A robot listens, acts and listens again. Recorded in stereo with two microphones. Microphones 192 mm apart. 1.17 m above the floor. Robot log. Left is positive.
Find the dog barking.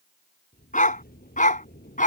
note: The dog barking: about 45° left or 135° left.
cmd yaw +45
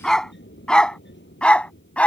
end: Facing the dog barking.